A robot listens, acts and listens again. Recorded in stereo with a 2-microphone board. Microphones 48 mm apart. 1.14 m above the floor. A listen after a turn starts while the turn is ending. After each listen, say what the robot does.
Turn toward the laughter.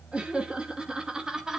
Turn 30° right.
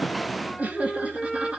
Turn 25° right.
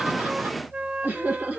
Turn 145° right.
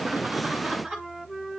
Turn 10° right.
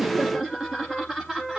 Facing the laughter.